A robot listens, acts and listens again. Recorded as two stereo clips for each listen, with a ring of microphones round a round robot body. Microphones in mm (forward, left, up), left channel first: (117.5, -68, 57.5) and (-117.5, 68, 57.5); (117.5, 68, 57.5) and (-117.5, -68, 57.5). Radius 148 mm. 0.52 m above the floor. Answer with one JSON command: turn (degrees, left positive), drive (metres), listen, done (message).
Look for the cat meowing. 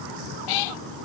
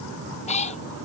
{"turn": -40}
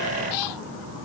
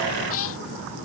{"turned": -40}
{"turn": -15}
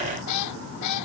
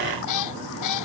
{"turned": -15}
{"done": "Facing the cat meowing."}